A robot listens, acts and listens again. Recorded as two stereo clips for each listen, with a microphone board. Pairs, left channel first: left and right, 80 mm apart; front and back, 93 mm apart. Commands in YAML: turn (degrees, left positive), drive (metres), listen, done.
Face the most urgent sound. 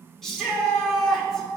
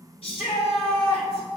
done: "Found it: a shout, straight ahead, 2 to 4 m away."